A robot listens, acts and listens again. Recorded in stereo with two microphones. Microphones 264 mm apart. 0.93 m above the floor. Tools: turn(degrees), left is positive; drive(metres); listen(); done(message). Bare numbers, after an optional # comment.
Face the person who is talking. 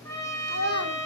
# The child speaking: about 65° left or 115° left.
turn(65)
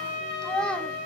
done("Found it: a child speaking, straight ahead.")